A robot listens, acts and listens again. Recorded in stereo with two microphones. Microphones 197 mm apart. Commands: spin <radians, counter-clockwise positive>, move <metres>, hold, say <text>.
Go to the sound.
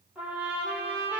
spin -0.52
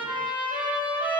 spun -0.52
spin 0.44
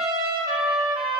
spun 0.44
move 1.0
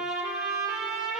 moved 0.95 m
move 1.0
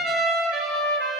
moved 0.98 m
move 1.0
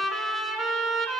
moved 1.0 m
move 1.0
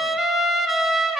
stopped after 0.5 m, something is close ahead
say I am next to the trumpet.